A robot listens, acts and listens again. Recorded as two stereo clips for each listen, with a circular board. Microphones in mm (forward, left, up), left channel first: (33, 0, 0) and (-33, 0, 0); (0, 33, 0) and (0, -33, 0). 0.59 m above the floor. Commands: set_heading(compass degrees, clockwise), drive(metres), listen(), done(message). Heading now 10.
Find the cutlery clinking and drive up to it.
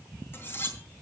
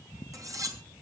set_heading(70)
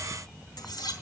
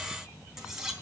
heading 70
set_heading(80)
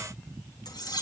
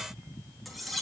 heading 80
drive(1.0)
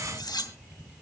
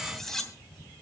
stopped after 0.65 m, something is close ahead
done("Something is in my way. I am facing the cutlery clinking but have not reached it.")